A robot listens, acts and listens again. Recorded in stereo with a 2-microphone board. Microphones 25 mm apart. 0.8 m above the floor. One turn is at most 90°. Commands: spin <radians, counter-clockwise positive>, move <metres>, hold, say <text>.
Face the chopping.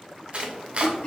spin -0.87
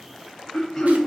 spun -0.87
hold
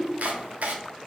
spin -1.31
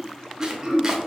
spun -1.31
hold
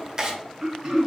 spin -0.44
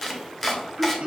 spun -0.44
say Found it: chopping, straight ahead, under 1 m away.